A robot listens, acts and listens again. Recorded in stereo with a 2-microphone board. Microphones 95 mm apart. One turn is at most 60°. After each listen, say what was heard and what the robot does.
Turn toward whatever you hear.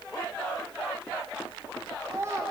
The child speaking: about 25° right or 155° right. Turn 25° right.
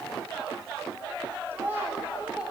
Turn 30° right.
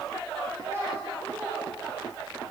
The child speaking: about 25° right or 155° right. Turn 25° right.
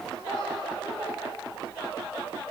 Keep listening.
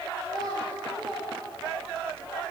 So it is at 130° right. Turn 60° right.
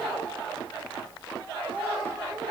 The child speaking is now 80° right. Turn 60° right.
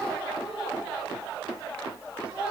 The child speaking is now 10° right. Turn 10° right.
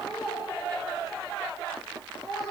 Found it: a child speaking, straight ahead.